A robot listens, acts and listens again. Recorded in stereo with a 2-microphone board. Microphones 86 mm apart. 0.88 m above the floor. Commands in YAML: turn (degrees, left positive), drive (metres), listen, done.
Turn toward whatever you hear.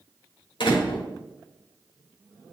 turn: 65
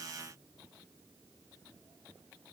listen: true
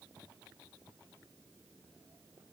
done: "I heard a door slam, but can't make it out now. It was about straight ahead or 50° left."